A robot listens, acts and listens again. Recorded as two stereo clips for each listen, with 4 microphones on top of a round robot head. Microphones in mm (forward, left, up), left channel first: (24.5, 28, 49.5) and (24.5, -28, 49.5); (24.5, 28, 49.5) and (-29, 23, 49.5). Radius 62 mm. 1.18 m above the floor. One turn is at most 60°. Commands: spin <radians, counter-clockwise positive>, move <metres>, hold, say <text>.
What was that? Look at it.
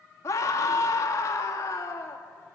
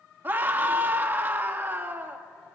spin 1.05
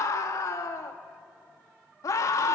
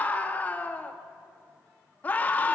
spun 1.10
spin 1.05
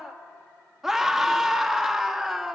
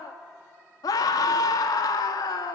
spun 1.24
say Facing the scream.